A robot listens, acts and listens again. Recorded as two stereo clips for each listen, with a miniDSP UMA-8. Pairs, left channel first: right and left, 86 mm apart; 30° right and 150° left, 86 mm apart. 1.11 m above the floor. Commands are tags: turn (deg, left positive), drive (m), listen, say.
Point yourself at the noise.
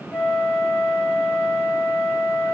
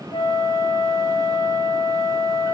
<turn deg="-15"/>
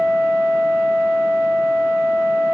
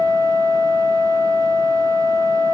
<say>Facing the flute.</say>